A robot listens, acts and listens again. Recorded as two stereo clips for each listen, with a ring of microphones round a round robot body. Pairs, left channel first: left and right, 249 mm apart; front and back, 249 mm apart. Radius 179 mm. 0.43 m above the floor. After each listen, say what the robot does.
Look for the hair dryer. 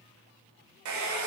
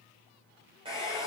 Turn 105° right.
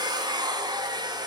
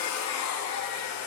Turn 15° right.
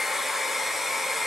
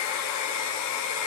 Facing the hair dryer.